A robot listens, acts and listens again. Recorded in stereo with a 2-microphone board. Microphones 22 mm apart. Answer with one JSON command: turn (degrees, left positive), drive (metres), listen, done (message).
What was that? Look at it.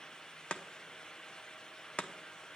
{"turn": 55}
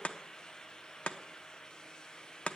{"turn": 65}
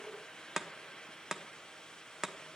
{"turn": -15}
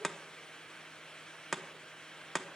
{"done": "Facing the chopping, under 1 m away."}